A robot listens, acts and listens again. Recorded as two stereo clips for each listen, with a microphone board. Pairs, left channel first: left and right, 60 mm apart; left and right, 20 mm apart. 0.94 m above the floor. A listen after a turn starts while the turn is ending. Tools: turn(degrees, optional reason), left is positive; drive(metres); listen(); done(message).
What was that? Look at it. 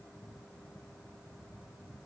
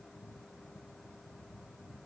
listen()
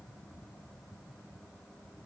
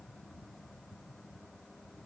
listen()
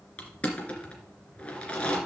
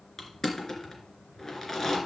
turn(degrees=20, reason="The crushing: about 20° left or 160° left.")
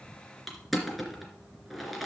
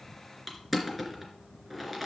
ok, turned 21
done("Facing the crushing.")